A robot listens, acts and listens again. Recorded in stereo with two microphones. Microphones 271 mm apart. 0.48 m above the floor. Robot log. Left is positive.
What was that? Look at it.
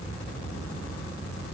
cmd idle
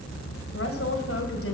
note: The woman speaking: about 55° left or 125° left.
cmd yaw +55
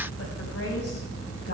note: So it is at 65° left.
cmd yaw +65
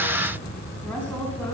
end: Facing the woman speaking.